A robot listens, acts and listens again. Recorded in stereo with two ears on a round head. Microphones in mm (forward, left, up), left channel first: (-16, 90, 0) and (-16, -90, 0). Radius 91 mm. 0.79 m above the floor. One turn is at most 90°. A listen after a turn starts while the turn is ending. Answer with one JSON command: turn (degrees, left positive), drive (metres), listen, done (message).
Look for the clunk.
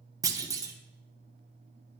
{"turn": -20}
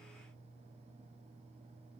{"listen": true}
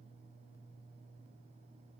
{"done": "I heard a clunk, but can't make it out now. It was about straight ahead or 140° right."}